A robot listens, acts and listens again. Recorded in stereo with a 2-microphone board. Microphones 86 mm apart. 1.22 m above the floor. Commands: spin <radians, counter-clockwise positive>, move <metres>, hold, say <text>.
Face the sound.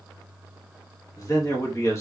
spin 0.61
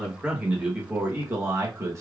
spin -0.61
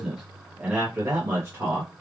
spin -0.52
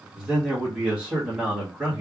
spin -0.17
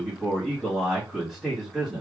say Facing the man speaking.